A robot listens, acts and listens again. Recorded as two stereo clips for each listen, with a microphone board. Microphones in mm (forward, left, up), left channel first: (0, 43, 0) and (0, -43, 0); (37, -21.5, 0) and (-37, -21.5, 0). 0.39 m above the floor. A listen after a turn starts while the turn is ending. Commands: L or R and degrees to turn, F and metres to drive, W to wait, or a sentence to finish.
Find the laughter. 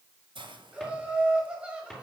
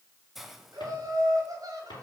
R165
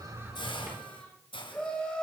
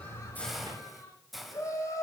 L15
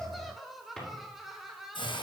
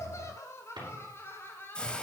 R10
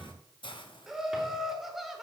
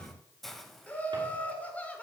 R15
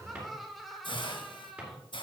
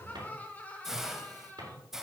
Facing the laughter.